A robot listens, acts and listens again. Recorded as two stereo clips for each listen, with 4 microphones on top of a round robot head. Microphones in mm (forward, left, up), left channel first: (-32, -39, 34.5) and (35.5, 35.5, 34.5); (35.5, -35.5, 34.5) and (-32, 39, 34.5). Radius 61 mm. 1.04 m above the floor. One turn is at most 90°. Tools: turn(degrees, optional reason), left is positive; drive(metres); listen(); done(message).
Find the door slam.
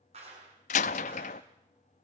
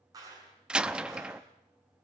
turn(degrees=-90, reason="The door slam: 145° right.")
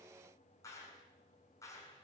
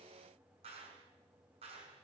turn(degrees=-55, reason="Nothing new. It was at 55° right.")
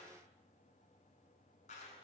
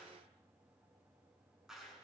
done("I heard a door slam from this way, but can't make it out now.")